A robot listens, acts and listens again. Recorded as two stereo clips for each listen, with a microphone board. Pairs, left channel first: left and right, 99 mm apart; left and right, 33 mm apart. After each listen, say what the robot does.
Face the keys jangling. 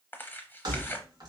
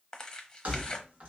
Turn 45° right.
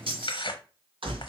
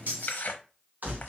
Turn 120° right.
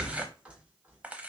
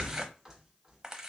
Turn 10° right.
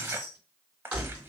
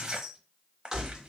Turn 15° right.
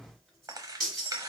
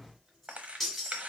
Facing the keys jangling.